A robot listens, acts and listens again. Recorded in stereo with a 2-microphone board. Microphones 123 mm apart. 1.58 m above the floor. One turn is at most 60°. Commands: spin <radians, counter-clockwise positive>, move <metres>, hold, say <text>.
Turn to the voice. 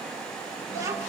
spin -0.44
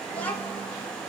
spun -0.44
spin 0.26
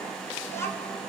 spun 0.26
spin 0.35
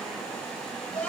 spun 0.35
spin 0.17
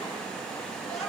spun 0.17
say Facing the child speaking.